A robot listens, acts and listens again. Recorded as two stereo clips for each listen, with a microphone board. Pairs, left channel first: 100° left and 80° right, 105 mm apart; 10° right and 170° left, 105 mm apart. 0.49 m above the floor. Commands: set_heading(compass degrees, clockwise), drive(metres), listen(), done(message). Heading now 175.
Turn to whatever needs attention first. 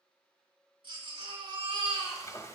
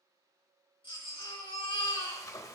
set_heading(220)
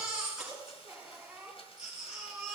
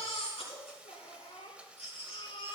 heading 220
done("Found it: a baby crying, straight ahead, over 4 m away.")